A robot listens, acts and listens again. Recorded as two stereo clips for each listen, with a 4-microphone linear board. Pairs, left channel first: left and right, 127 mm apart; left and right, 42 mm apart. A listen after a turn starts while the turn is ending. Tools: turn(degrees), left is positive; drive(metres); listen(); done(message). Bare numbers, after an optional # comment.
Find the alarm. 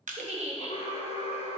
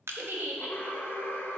# The alarm: about 50° left or 130° left.
turn(50)
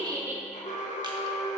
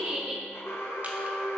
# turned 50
# So it is at 75° left.
turn(75)
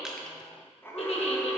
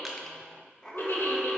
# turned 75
# The alarm is now 20° left.
turn(20)
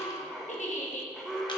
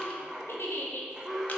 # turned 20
done("Facing the alarm.")